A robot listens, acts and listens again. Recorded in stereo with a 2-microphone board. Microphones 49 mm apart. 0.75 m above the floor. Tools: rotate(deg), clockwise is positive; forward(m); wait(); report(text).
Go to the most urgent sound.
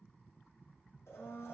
wait()
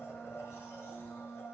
wait()
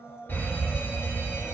rotate(-50)
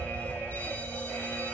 rotate(-65)
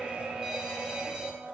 rotate(10)
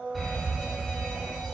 forward(1.0)
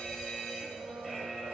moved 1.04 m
forward(1.0)
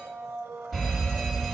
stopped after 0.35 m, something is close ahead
report("Arrived at the fire alarm, straight ahead.")